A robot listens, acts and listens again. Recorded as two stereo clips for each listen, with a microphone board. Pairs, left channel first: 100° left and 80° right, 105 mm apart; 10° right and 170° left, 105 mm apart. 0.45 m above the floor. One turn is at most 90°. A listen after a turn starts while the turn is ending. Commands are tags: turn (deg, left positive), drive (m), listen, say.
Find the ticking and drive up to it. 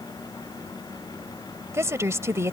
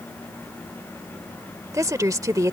<listen/>
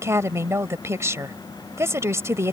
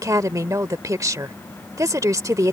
<listen/>
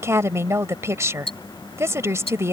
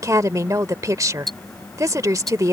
<turn deg="75"/>
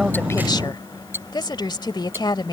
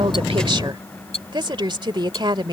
<turn deg="-10"/>
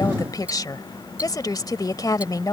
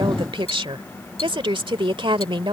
<drive m="1.0"/>
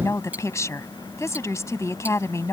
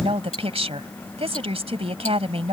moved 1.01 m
<drive m="1.0"/>
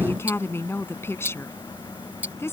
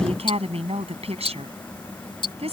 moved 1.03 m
<turn deg="-10"/>
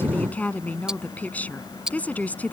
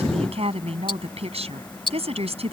<drive m="1.0"/>
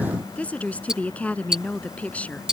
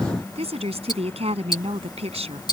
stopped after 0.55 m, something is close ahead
<say>I am next to the ticking.</say>